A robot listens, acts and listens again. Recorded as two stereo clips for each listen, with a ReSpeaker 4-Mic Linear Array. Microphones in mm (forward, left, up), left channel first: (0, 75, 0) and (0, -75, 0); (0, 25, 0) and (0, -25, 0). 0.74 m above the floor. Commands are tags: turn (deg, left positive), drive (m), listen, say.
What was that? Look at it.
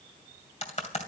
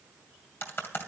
<turn deg="50"/>
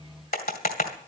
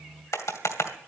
<turn deg="80"/>
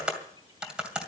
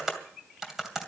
<say>Found it: typing on a keyboard, straight ahead, 2 to 4 m away.</say>